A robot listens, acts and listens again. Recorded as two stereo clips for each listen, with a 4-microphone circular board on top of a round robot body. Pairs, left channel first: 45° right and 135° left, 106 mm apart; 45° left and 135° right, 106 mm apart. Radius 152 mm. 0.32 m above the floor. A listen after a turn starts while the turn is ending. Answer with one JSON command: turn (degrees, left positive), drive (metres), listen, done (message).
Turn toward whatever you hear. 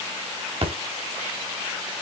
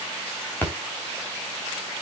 {"turn": 115}
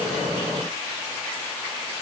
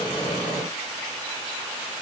{"done": "I heard a splash from this way, but can't make it out now."}